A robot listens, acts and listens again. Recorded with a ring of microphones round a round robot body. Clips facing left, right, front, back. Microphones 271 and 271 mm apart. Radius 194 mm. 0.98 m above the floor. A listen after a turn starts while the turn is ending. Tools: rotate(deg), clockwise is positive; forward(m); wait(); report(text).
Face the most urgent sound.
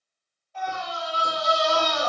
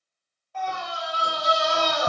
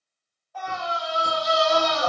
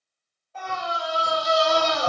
rotate(115)
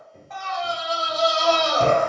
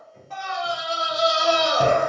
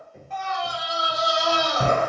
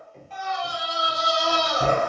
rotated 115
rotate(15)
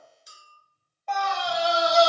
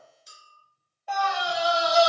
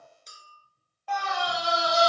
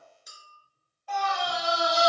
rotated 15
rotate(10)
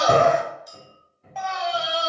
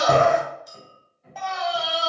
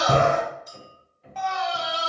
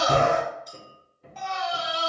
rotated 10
report("Found it: a scream, straight ahead.")